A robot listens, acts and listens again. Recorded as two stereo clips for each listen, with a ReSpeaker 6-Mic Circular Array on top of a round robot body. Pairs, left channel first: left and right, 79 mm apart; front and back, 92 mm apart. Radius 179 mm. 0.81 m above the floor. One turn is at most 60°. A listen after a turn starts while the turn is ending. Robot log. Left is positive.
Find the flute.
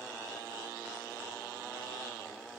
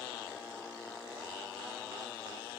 cmd idle
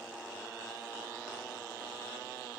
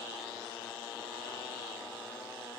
cmd idle
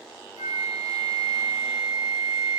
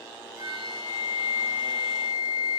note: The flute: 90° left.
cmd yaw +60
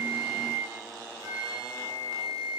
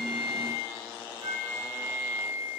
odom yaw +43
note: The flute is now 45° left.
cmd yaw +45
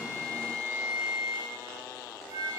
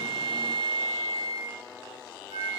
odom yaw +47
end: Found it: a flute, straight ahead, 2 to 4 m away.